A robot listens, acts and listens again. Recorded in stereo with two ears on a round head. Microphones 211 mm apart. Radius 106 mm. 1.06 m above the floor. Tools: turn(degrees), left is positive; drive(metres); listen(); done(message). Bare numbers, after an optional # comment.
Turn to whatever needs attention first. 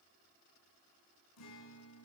listen()
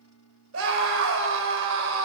# The scream: about 55° right or 125° right.
turn(-55)
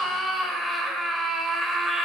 done("Found it: a scream, straight ahead, 2 to 4 m away.")